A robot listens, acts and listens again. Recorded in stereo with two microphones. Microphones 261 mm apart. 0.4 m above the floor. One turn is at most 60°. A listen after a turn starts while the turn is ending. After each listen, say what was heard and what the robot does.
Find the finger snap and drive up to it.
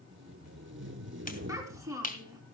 The finger snap: about 30° left or 150° left. Turn 30° left.
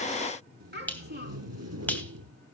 Drive 1.0 m forward.
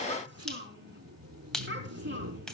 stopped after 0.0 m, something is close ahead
Blocked. The finger snap is further on, straight ahead.